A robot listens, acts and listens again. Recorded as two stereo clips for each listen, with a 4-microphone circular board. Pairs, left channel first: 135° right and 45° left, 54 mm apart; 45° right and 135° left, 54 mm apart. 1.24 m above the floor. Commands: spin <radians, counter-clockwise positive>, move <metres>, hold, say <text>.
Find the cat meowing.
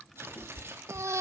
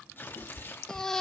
spin -1.48
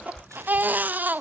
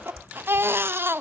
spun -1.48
spin -0.44
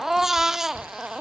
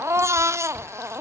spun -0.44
hold
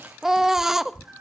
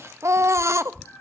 say Facing the cat meowing, 2 to 4 m away.